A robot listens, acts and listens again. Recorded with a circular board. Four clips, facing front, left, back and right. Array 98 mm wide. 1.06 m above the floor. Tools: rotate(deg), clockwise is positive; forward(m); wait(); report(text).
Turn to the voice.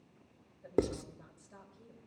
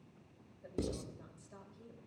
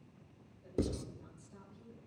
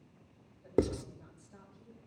rotate(-50)
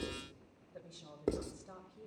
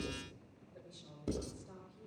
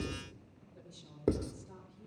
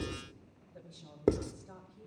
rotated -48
report("Found it: a woman speaking, straight ahead.")